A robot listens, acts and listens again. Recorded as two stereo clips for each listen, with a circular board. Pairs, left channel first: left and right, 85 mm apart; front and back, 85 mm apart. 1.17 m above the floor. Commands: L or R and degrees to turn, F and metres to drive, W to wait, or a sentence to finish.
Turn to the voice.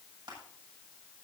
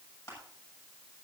W
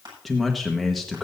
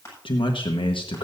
Found it: a man speaking, straight ahead, 1 to 2 m away.